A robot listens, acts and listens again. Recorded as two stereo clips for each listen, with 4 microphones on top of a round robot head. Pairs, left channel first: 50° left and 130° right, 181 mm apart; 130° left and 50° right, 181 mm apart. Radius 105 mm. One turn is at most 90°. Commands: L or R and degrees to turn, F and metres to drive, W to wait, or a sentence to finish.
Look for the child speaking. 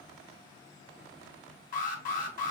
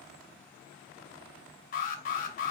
W
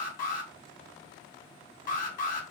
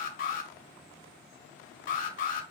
W
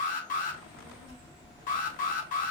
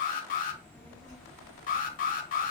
R90
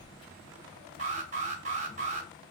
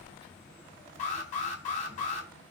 R15
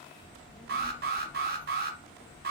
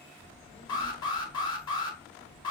Facing the child speaking.